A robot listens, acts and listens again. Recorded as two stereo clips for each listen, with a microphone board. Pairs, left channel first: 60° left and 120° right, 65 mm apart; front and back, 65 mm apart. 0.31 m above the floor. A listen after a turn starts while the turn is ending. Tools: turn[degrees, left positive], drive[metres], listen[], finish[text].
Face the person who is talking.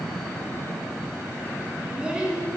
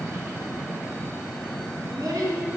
Thought: The child speaking: 165° left.
Action: turn[165]
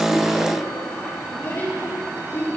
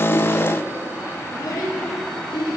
Action: finish[Found it: a child speaking, straight ahead.]